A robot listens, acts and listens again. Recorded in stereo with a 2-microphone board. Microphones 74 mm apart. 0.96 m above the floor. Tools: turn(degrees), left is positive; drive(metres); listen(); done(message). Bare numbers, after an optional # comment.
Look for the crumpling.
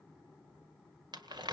turn(-90)
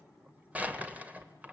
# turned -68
# So it is at 20° right.
turn(-20)
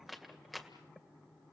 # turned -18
done("Facing the crumpling, 1 to 2 m away.")